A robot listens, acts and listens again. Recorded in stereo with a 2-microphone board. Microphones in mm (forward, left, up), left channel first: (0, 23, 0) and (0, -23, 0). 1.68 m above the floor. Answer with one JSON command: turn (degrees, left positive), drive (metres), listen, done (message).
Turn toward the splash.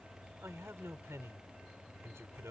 {"listen": true}
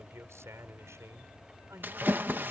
{"turn": -50}
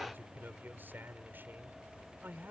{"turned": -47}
{"listen": true}
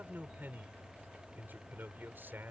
{"done": "I heard a splash, but can't make it out now. It was about straight ahead or 85° right."}